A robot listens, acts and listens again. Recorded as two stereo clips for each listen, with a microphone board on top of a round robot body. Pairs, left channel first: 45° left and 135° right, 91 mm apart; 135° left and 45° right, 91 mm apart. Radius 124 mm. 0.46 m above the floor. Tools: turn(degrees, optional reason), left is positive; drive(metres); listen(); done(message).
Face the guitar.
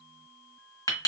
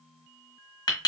listen()
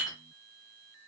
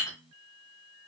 listen()
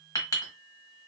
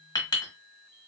done("I can't make out a guitar, only a clink.")